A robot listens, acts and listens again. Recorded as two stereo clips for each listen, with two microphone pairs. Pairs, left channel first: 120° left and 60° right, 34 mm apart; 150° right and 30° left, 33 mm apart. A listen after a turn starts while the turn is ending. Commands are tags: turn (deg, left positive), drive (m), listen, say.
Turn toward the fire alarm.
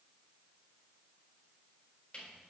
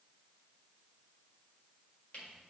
<listen/>
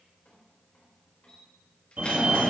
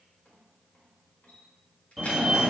<turn deg="-60"/>
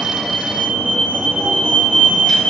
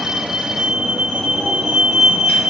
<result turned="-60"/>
<turn deg="-35"/>
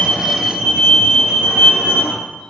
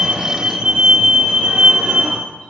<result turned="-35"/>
<say>Facing the fire alarm.</say>